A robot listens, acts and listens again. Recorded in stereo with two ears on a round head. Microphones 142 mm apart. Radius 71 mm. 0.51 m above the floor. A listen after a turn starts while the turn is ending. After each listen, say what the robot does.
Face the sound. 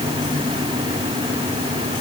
Keep listening.
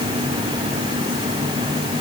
Keep listening.
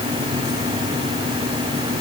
I can't make out anything to turn to.